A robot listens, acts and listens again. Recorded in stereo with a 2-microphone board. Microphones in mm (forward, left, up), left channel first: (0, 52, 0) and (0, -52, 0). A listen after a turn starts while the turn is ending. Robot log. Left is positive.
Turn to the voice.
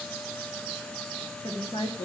cmd yaw +90
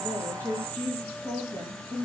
note: So it is at 25° left.
cmd yaw +25
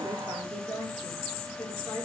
note: The woman speaking is now 10° left.
cmd yaw +10
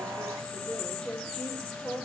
end: Found it: a woman speaking, straight ahead, over 4 m away.